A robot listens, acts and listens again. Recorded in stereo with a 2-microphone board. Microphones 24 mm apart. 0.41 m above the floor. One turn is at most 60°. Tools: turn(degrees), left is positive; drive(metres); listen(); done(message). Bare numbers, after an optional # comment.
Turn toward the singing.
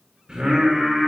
# The singing: about 45° right or 135° right.
turn(-45)
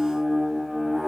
done("Found it: singing, straight ahead, over 4 m away.")